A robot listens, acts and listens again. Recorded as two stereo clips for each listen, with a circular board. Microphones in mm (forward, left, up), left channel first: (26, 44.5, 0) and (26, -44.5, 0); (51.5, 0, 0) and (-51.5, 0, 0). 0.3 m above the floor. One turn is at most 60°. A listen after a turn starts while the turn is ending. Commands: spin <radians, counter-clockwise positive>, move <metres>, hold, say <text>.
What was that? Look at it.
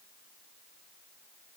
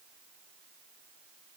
hold
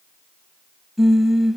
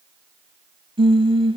spin -1.05
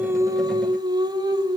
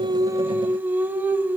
spin -1.05
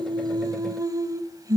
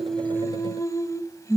spin -0.87
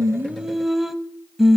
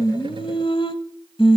say Facing the singing.